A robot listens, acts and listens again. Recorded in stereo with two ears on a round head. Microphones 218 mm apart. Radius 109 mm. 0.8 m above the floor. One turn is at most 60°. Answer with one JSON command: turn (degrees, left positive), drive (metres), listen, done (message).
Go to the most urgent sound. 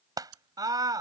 {"turn": -15}
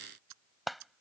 {"drive": 1.0}
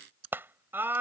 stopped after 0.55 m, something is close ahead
{"turn": -10}
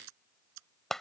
{"done": "Blocked. The scream is further on, straight ahead."}